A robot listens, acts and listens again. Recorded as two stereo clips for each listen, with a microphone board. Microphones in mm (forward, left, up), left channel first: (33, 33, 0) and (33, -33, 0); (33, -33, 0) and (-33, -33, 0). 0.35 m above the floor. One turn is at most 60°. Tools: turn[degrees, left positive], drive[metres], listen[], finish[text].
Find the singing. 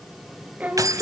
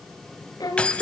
Thought: The singing: 15° right.
Action: turn[-15]
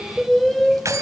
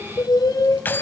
Action: finish[Facing the singing, 2 to 4 m away.]